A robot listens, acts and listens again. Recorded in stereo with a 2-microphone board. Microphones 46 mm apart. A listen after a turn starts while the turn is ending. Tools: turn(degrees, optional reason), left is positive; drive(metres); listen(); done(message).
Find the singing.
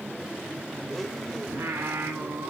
turn(degrees=-90)
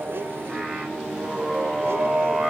turn(degrees=-15, reason="So it is at 15° right.")
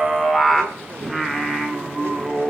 done("Found it: singing, straight ahead, 1 to 2 m away.")